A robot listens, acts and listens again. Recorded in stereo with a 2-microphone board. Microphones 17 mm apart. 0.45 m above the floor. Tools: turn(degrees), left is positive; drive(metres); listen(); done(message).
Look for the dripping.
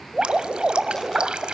turn(degrees=-60)
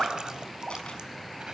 turn(degrees=-55)
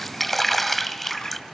done("Found it: dripping, straight ahead.")